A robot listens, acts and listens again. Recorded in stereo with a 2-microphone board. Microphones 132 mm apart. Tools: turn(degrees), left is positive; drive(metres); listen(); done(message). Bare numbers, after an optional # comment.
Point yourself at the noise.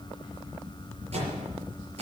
# The microwave: about 60° right or 120° right.
turn(-60)
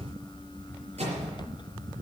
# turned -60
# So it is at 60° right.
turn(-60)
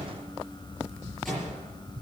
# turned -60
done("Facing the microwave, over 4 m away.")